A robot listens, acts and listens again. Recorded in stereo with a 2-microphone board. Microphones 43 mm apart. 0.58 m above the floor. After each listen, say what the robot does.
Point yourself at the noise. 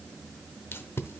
Turn 70° left.
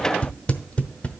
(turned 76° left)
Turn 30° left.
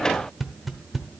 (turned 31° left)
Facing the tape being pulled.